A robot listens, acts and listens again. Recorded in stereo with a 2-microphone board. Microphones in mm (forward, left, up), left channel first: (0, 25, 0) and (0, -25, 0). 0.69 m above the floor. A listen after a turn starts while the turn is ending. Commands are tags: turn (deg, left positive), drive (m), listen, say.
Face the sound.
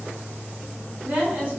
<turn deg="-30"/>
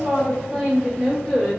<say>Facing the woman speaking, 1 to 2 m away.</say>